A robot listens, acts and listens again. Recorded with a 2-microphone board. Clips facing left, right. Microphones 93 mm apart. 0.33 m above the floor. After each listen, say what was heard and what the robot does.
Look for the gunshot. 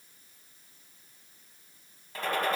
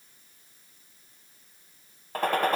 The gunshot: about 55° right or 125° right. Turn 55° right.
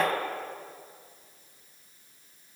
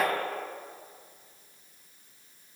Facing the gunshot.